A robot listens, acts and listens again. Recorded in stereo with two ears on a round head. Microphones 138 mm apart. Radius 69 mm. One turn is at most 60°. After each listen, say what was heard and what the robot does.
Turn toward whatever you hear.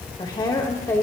The woman speaking: about 15° left or 165° left. Turn 15° left.
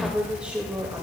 So it is at 10° right. Turn 10° right.
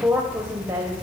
The woman speaking is now 25° right. Turn 25° right.
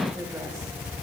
Keep listening.
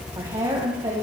The woman speaking is now 30° right. Turn 30° right.
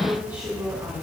Keep listening.
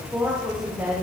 The woman speaking is now 15° right. Turn 15° right.
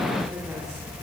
Keep listening.
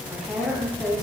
Found it: a woman speaking, straight ahead.